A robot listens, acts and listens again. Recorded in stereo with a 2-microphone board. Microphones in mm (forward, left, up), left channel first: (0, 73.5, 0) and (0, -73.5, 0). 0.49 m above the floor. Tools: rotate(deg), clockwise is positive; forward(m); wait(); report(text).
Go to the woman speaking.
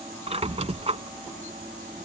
wait()
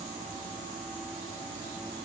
wait()
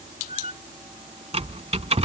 report("I can't make out a woman speaking, only a squeak.")